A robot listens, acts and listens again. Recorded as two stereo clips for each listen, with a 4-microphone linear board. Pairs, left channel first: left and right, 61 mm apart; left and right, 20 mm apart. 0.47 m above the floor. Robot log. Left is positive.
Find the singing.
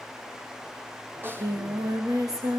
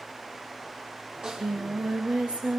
note: The singing: about 70° right or 110° right.
cmd yaw -70
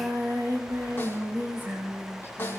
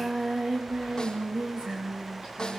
note: So it is at 40° right.
cmd yaw -40
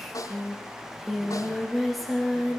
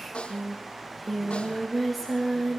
end: Facing the singing.